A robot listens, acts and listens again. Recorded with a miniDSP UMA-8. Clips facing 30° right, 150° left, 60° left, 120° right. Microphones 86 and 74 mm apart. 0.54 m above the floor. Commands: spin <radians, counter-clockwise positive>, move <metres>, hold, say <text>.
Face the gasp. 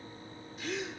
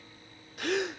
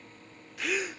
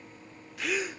spin 2.62
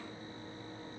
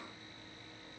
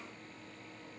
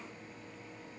say I heard a gasp from this way, but can't make it out now.